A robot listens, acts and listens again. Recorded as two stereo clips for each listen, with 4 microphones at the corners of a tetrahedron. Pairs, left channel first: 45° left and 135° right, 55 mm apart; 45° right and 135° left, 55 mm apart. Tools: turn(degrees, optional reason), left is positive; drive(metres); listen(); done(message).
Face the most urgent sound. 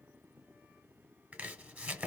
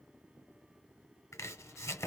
listen()
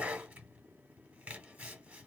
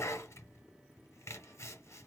listen()
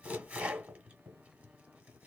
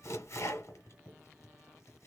done("I can't make out anything urgent to turn to.")